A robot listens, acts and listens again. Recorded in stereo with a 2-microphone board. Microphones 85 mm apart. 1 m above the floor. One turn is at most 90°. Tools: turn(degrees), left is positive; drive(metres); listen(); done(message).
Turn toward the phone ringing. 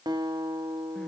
listen()
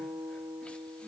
listen()
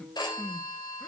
turn(degrees=55)
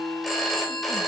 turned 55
done("Facing the phone ringing, 2 to 4 m away.")